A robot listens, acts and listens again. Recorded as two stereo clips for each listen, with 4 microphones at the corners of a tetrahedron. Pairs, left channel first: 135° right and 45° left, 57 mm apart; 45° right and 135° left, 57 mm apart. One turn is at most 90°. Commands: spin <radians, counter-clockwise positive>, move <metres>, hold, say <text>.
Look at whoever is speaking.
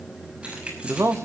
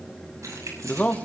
spin 0.35
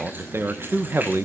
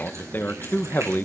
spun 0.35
say Found it: a man speaking, straight ahead.